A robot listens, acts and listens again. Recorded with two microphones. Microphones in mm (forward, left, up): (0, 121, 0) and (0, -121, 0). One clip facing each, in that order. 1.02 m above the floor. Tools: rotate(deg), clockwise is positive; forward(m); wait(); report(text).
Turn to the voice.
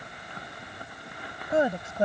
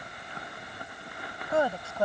rotate(-20)
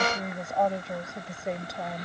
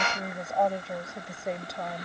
rotate(-30)
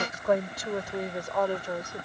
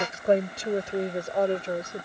rotate(25)
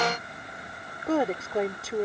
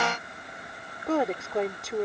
report("Facing the woman speaking.")